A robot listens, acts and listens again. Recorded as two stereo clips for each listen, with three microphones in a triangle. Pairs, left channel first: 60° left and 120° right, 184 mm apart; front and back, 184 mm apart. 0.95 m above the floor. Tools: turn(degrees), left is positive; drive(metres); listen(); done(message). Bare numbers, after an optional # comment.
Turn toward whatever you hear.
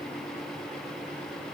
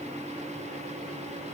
listen()
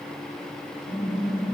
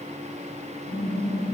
# The typing on a keyboard: 75° left.
turn(75)
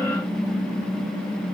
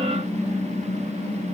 done("Facing the typing on a keyboard.")